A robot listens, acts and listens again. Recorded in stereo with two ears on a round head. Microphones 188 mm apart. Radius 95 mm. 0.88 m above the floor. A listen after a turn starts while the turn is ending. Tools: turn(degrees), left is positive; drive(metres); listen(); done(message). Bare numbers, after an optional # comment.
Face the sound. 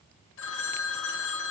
# The phone ringing: about 65° left or 115° left.
turn(65)
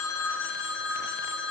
# So it is at 55° left.
turn(55)
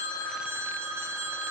# The phone ringing is now 10° right.
turn(-10)
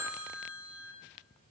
done("Found it: a phone ringing, straight ahead.")